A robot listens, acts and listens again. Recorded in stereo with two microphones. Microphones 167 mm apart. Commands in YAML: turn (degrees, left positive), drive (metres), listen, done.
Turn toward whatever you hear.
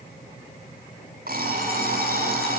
turn: -65
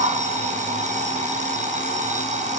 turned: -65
turn: -45
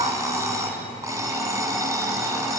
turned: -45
turn: -20
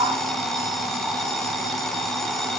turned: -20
done: "Found it: an alarm clock, straight ahead."